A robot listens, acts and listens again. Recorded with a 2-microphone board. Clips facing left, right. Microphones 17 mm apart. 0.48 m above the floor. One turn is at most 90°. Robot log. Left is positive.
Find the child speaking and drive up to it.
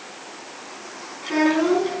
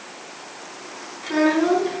cmd yaw +30
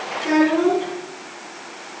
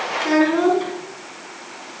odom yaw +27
note: So it is at 25° right.
cmd yaw -25
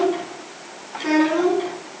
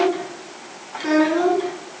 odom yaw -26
cmd fwd 1.0
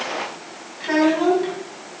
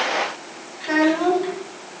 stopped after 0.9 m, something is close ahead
end: Something is in my way. I am facing the child speaking but have not reached it.